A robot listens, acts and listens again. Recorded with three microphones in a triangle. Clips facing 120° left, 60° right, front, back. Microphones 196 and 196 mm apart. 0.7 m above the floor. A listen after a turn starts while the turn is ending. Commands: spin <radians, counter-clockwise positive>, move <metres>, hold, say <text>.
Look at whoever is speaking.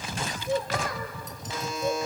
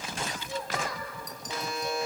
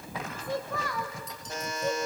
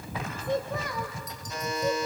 spin 1.75
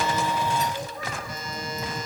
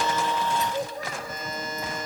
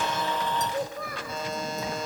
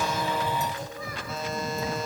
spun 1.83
spin -0.26
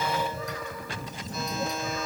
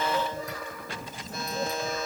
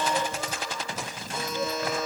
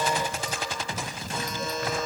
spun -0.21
hold
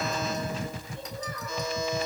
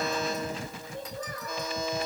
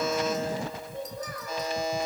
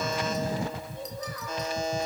spin -0.44
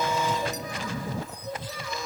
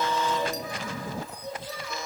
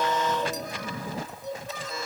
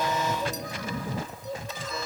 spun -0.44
say Facing the child speaking, over 4 m away.